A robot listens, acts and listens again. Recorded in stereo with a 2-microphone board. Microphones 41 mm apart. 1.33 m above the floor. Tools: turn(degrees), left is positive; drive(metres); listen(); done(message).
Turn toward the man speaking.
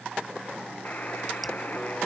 listen()
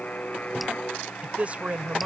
turn(degrees=-30)
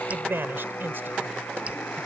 turn(degrees=-120)
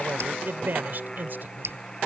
turn(degrees=-50)
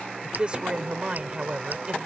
turn(degrees=-25)
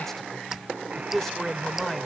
done("Facing the man speaking.")